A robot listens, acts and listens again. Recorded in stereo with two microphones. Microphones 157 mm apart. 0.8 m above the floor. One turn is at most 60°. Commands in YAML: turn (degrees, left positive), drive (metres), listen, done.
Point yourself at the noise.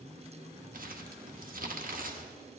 turn: -60
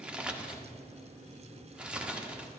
done: "Facing the crumpling, under 1 m away."